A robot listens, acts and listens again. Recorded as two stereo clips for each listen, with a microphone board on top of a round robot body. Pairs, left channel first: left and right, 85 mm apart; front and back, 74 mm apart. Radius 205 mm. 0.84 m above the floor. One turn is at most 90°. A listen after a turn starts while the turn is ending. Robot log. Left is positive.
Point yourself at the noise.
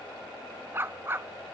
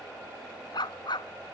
note: The dog barking: 25° right.
cmd yaw -25
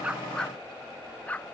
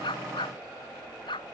note: The dog barking is now 15° left.
cmd yaw +15
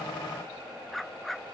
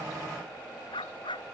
end: Found it: a dog barking, straight ahead.